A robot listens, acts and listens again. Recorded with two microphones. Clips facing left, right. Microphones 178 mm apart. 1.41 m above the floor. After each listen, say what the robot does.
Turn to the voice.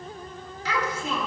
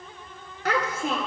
Turn 55° right.
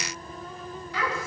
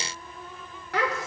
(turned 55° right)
Turn 70° right.
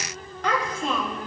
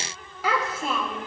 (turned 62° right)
Facing the child speaking.